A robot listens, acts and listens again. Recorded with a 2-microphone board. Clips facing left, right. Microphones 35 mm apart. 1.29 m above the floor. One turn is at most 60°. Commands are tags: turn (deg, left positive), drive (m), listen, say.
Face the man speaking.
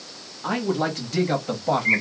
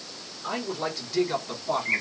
<turn deg="60"/>
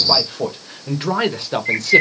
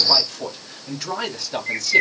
<turn deg="50"/>
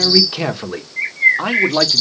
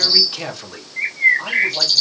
<turn deg="55"/>
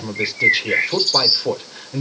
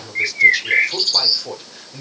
<turn deg="20"/>
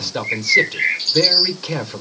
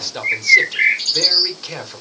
<say>Facing the man speaking.</say>